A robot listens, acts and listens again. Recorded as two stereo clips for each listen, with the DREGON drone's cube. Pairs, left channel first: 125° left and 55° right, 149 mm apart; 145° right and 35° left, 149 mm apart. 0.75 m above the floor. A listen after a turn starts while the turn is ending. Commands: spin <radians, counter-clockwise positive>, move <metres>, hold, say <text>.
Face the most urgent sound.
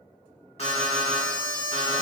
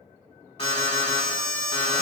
spin 2.97
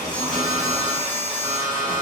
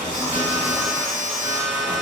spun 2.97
spin 0.44
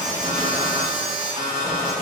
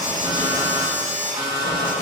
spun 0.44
say Found it: an alarm, straight ahead, 1 to 2 m away.